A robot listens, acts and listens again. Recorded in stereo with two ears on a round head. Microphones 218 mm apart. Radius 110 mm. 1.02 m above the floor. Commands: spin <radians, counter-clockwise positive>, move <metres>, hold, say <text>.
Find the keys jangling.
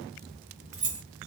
spin -0.52
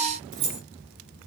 spin -2.09
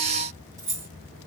spin -0.17
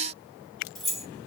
say Facing the keys jangling, 1 to 2 m away.